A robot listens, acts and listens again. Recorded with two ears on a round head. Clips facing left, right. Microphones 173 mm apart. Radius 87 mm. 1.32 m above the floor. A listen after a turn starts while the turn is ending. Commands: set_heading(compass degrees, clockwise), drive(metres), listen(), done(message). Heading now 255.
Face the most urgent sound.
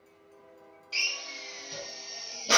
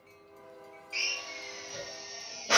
listen()
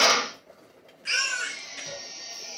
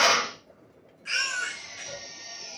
set_heading(185)
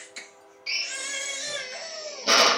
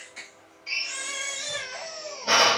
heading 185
set_heading(170)
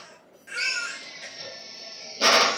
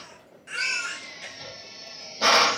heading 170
done("Found it: a baby crying, straight ahead, under 1 m away.")